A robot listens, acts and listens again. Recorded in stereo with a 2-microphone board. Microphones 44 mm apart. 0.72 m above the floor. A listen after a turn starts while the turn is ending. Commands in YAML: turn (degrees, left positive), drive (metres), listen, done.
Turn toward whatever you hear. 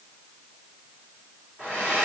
turn: 35
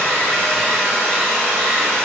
done: "Found it: a hair dryer, straight ahead."